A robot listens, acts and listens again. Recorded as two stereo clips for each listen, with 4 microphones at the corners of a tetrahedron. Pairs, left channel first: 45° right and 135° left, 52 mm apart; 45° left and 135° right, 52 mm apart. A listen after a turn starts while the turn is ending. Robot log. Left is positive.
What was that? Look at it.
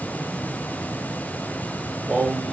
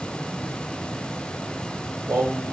note: The singing: 145° right.
cmd yaw -145
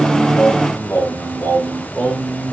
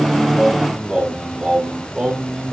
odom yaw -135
note: The singing is now 90° right.
cmd yaw -90
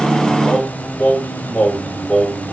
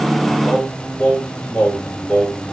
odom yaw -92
note: The singing is now 15° right.
cmd yaw -15
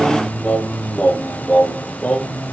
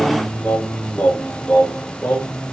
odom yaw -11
end: Facing the singing.